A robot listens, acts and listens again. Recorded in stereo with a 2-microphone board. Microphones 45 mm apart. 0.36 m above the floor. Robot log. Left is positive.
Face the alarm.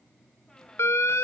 note: The alarm: about 65° left or 115° left.
cmd yaw +65
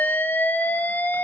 note: So it is at 40° left.
cmd yaw +40
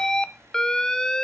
note: The alarm is now 15° left.
cmd yaw +15
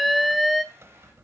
end: Facing the alarm.